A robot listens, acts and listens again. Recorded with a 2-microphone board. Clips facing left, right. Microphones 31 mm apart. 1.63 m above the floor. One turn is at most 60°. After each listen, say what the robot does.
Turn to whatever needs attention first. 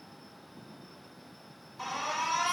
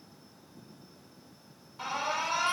Turn 25° right.
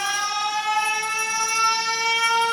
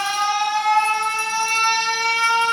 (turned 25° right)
Turn 60° right.
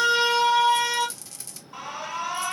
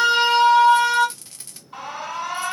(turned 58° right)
Turn 60° right.
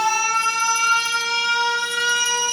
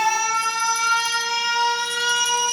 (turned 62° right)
Turn 10° right.
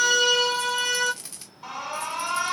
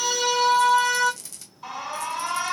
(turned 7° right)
Facing the alarm, 2 to 4 m away.